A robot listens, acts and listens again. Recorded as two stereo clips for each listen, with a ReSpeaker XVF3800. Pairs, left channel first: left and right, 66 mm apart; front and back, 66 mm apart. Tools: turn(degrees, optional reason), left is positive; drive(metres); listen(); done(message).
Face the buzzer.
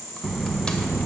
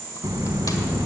turn(degrees=175, reason="The buzzer: 175° left.")
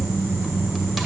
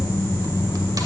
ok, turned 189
turn(degrees=-15, reason="The buzzer is now 15° right.")
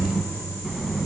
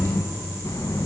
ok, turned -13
done("Found it: a buzzer, straight ahead.")